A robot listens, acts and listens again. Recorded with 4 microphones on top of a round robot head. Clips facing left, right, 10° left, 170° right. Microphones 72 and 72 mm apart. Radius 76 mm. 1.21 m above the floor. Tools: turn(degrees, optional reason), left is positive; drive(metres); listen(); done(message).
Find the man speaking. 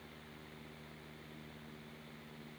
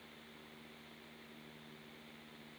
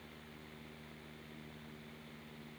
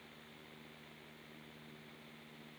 listen()
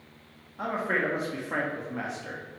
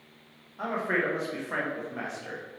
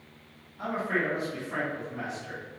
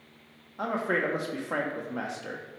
turn(degrees=180, reason="The man speaking: straight behind.")
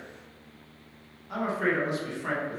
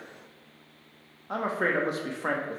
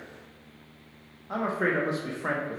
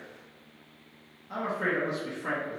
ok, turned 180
turn(degrees=-45, reason="The man speaking is now 45° right.")
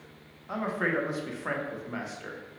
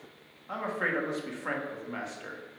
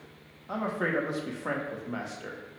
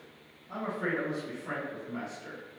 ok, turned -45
done("Facing the man speaking.")